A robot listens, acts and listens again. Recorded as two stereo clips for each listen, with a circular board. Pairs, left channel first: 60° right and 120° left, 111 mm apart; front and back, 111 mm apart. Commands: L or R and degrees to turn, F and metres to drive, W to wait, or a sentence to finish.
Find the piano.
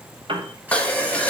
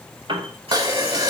L150
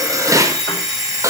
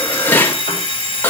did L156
R10
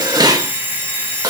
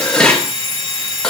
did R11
W
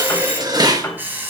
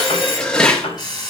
Found it: a piano, straight ahead.